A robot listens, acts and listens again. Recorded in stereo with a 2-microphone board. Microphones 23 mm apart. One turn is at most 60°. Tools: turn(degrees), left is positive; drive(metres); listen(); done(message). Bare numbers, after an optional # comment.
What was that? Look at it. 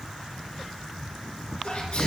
# The sneeze: about 65° left or 115° left.
turn(60)
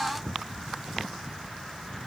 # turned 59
listen()
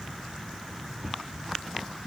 done("I heard a sneeze, but can't make it out now. It was about 5° left or 55° left.")